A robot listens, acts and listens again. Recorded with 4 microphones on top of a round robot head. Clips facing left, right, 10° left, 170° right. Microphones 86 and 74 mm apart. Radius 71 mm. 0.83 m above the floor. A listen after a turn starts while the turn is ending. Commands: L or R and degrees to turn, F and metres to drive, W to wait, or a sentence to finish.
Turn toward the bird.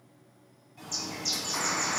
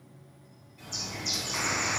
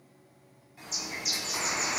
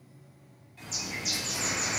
L85
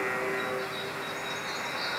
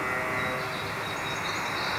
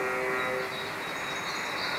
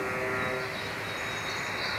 W
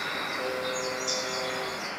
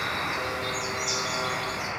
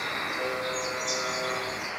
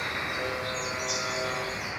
Found it: a bird, straight ahead, over 4 m away.